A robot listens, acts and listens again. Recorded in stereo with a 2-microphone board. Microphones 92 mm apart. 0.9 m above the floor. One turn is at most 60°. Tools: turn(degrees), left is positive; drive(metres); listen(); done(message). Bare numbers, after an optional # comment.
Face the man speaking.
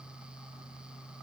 listen()
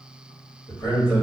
# The man speaking: about 45° left or 135° left.
turn(45)
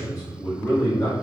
# So it is at 20° left.
turn(20)
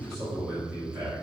# The man speaking is now 10° right.
turn(-10)
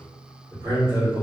# The man speaking is now 30° right.
turn(-30)
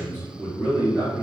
# The man speaking is now 15° right.
turn(-15)
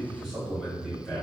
done("Found it: a man speaking, straight ahead, 1 to 2 m away.")